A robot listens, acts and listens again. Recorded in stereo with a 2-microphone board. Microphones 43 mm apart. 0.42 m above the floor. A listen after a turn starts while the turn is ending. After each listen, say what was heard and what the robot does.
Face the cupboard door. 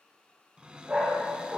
The cupboard door: about 25° right or 155° right. Turn 25° right.
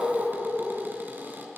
Keep listening.
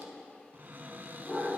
So it is at 130° right. Turn 130° right.
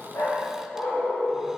Keep listening.
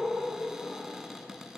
The cupboard door is now 10° right. Turn 10° right.
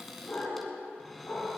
Found it: a cupboard door, straight ahead, 1 to 2 m away.